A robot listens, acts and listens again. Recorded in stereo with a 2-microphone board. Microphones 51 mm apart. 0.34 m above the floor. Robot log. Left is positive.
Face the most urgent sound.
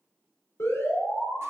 note: The alarm: about 65° left or 115° left.
cmd yaw +65
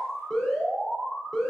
note: So it is at 10° left.
cmd yaw +10
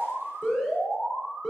end: Facing the alarm.